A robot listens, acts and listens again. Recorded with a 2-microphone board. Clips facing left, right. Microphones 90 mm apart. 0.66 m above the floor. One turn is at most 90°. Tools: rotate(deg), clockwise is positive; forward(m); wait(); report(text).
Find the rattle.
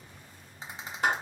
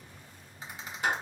rotate(-30)
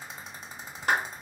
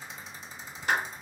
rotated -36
rotate(-90)
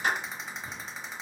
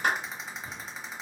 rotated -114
report("Found it: a rattle, straight ahead.")